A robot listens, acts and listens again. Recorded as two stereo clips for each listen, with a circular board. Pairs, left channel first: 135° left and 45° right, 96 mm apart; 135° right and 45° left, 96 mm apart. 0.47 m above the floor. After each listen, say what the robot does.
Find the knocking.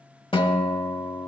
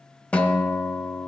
Keep listening.
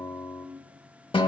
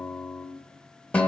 Keep listening.
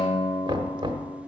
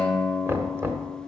Turn 15° right.
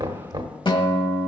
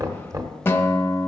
Found it: knocking, straight ahead, 1 to 2 m away.